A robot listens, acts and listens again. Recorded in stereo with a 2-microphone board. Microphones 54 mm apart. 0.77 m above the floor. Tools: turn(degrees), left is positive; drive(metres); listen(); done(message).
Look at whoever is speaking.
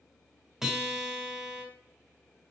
listen()
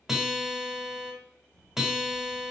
turn(degrees=-90)
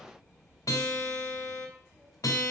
done("Found it: a child speaking, straight ahead.")